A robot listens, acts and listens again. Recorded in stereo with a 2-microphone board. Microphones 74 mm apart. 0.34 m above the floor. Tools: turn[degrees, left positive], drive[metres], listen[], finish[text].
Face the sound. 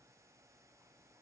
Action: listen[]
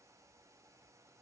Action: listen[]
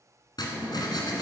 Thought: The writing: about 70° left or 110° left.
Action: turn[70]
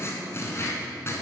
Thought: So it is at 35° left.
Action: turn[35]
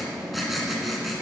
Action: finish[Found it: writing, straight ahead, 1 to 2 m away.]